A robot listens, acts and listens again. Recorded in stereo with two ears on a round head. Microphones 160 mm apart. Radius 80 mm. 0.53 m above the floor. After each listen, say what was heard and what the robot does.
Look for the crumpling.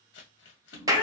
The crumpling: about 75° left or 105° left. Turn 75° left.
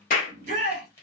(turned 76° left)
So it is at 15° left. Turn 15° left.
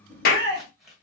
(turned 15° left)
Facing the crumpling.